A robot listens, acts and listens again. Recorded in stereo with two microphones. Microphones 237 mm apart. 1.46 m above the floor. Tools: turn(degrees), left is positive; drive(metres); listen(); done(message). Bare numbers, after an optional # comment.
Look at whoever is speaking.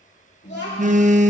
# The child speaking: about 45° left or 135° left.
turn(45)
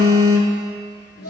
# So it is at 90° left.
turn(90)
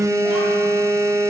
listen()
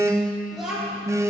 done("Found it: a child speaking, straight ahead.")